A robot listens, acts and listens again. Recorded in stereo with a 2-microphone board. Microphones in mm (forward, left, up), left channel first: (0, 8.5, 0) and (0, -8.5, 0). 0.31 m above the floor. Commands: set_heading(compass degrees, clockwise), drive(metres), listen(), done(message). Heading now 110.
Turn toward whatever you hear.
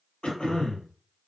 set_heading(40)
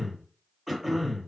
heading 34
done("Facing the throat clearing, 1 to 2 m away.")